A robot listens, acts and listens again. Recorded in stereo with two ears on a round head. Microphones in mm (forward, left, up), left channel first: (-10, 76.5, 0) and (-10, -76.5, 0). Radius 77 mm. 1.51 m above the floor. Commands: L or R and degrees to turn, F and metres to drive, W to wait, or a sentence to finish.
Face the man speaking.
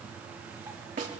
W
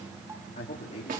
L45
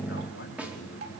L85
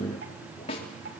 W
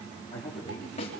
L30
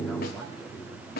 W
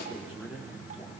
Found it: a man speaking, straight ahead.